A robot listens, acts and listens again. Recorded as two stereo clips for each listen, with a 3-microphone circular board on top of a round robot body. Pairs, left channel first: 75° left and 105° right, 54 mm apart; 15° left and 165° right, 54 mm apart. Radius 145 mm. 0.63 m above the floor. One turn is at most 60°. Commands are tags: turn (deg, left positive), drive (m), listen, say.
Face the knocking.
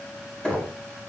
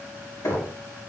<say>Found it: knocking, straight ahead.</say>